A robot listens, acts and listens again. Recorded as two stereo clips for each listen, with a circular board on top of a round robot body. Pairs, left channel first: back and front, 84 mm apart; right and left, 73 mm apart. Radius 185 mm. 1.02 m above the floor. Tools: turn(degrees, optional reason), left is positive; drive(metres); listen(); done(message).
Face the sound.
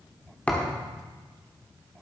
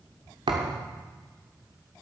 turn(degrees=105, reason="The thud: 105° left.")
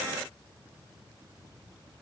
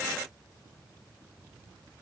done("Facing where the thud came from. I can't hear it now.")